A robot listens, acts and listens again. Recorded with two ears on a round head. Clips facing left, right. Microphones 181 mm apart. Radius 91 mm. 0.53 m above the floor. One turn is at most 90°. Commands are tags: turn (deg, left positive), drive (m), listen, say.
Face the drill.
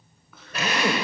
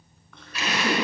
<turn deg="40"/>
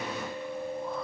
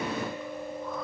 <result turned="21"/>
<listen/>
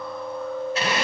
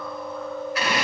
<turn deg="25"/>
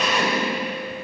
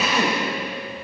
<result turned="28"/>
<say>Facing the drill, 2 to 4 m away.</say>